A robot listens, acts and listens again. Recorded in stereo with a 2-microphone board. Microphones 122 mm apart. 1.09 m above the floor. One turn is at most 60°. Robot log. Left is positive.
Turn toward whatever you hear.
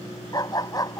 note: The dog barking: about 30° left or 150° left.
cmd yaw +30
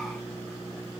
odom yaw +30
cmd idle
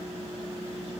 cmd idle
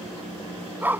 note: So it is at 15° right.
cmd yaw -15
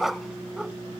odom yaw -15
end: Found it: a dog barking, straight ahead.